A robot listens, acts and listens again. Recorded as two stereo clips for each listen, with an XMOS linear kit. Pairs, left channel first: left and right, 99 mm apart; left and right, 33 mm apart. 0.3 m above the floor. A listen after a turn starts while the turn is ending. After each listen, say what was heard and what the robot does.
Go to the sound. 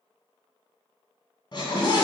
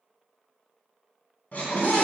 The scream: about 45° left or 135° left. Turn 45° left.
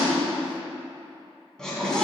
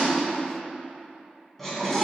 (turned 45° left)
So it is at 10° left. Turn 10° left.
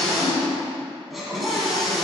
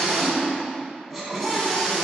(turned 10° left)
Drive 1.0 m forward.
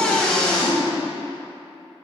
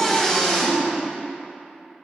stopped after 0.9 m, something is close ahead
The scream is now 10° left. Turn 10° left.
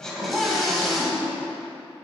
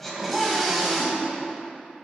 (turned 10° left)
I am next to the scream.